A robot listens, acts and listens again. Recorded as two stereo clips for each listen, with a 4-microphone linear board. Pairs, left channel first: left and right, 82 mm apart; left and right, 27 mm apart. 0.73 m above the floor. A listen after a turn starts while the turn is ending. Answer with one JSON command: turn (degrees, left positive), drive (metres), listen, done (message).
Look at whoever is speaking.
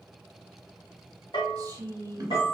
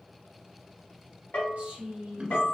{"turn": -40}
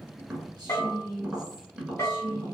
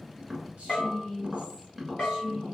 {"turn": -35}
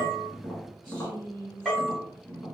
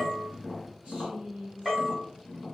{"turn": -50}
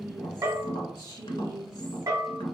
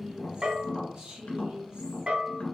{"turn": -65}
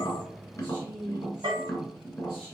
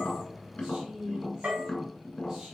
{"turn": -10}
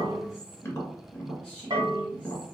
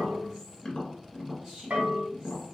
{"done": "Facing the woman speaking, 2 to 4 m away."}